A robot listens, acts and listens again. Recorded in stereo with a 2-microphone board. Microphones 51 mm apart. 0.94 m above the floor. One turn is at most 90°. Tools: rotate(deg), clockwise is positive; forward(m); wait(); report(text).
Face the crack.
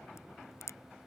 rotate(-90)
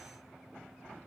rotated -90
report("Facing where the crack came from. I can't hear it now.")